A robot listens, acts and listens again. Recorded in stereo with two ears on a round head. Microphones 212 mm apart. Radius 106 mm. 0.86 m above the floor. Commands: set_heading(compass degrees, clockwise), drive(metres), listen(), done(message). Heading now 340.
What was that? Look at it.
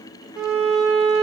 set_heading(10)
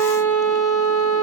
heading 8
set_heading(343)
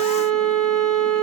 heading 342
done("Found it: a violin, straight ahead, 2 to 4 m away.")